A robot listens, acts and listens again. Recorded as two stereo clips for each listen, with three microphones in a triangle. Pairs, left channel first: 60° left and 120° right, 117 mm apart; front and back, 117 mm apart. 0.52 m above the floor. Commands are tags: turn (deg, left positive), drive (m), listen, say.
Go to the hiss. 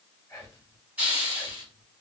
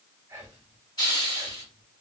<turn deg="-45"/>
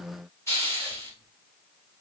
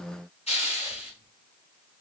<drive m="1.0"/>
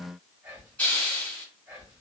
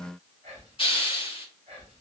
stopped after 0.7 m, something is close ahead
<turn deg="-10"/>
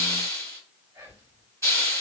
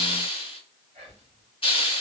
<say>I am next to the hiss.</say>